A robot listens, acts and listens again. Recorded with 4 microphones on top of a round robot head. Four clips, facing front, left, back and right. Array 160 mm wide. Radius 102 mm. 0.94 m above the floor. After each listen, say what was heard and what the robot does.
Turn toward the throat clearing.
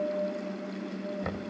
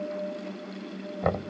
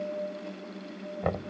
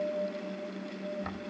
Keep listening.
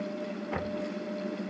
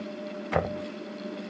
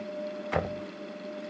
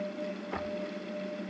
Keep listening.
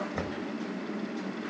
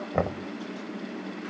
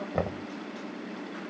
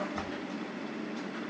I can't make out throat clearing to turn to.